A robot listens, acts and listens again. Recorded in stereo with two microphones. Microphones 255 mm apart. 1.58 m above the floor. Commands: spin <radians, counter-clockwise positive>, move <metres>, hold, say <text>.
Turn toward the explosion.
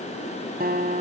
hold
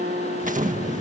spin -0.52
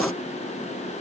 hold
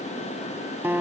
say I heard an explosion, but can't make it out now. It was about straight ahead or 120° right.